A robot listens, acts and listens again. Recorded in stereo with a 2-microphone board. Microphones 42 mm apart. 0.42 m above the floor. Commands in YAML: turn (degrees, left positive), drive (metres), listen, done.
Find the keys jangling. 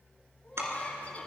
turn: -90
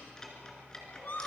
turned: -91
turn: 20
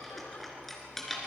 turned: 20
turn: 10
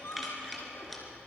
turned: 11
done: "Found it: keys jangling, straight ahead, 2 to 4 m away."